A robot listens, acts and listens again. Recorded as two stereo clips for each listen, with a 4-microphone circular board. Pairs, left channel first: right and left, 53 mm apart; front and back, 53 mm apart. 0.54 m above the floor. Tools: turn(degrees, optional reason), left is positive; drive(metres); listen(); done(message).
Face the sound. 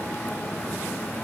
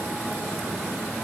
listen()
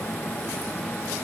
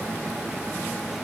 listen()
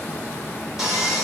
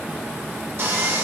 turn(degrees=170, reason="The sawing: 170° left.")
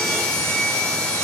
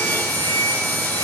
turn(degrees=-20, reason="The sawing is now 20° right.")
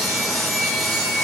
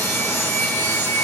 done("Facing the sawing.")